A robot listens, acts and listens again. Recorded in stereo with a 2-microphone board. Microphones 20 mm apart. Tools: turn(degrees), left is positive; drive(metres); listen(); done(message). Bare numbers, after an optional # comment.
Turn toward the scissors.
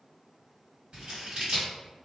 # The scissors: about 55° right or 125° right.
turn(-55)
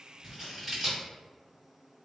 # So it is at 20° right.
turn(-20)
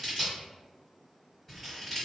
done("Facing the scissors, 1 to 2 m away.")